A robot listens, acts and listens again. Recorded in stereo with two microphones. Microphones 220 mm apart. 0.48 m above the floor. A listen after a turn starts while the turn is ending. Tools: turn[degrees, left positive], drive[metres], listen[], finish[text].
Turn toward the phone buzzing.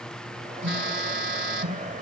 Thought: The phone buzzing: about 60° right or 120° right.
Action: turn[-60]
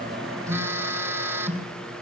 Thought: So it is at 15° right.
Action: turn[-15]
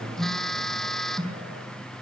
Action: finish[Facing the phone buzzing, 2 to 4 m away.]